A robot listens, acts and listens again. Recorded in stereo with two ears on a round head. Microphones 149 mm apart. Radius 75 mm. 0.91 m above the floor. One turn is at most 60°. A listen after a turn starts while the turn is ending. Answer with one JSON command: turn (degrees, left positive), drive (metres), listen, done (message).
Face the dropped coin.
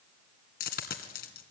{"turn": 60}
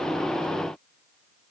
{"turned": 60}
{"listen": true}
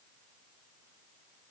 {"done": "I heard a dropped coin, but can't make it out now. It was about straight ahead or 60° left."}